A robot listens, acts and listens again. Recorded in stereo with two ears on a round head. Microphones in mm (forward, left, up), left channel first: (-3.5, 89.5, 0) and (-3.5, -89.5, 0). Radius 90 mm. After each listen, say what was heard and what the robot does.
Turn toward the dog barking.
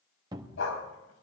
The dog barking: about 70° left or 110° left. Turn 70° left.
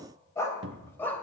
So it is at 10° left. Turn 10° left.
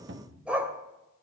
The dog barking is now 10° right. Turn 10° right.
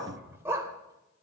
The dog barking is now 15° right. Turn 15° right.
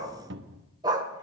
The dog barking is now 20° right. Turn 20° right.
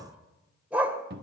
Found it: a dog barking, straight ahead.